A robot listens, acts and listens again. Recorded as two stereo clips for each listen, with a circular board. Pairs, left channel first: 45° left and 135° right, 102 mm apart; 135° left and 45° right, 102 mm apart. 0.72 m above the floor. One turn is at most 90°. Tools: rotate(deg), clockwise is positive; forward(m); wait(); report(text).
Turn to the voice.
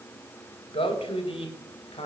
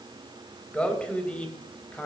rotate(-55)
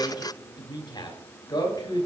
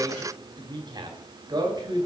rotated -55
report("Facing the man speaking.")